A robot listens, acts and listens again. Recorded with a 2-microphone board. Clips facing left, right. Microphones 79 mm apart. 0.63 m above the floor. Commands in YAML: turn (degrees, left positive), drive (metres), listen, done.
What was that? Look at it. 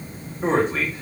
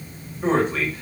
turn: 35
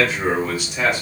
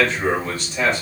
turn: 15
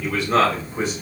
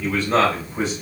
done: "Found it: a man speaking, straight ahead, 2 to 4 m away."